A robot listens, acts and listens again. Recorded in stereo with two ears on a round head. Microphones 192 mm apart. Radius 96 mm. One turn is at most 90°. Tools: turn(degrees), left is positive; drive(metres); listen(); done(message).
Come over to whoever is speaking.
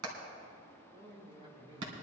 turn(degrees=-25)
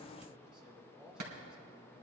drive(metres=1.0)
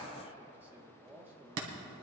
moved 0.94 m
turn(degrees=-10)
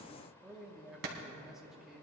drive(metres=1.0)
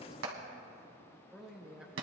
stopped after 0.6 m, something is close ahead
done("Arrived at the man speaking, straight ahead.")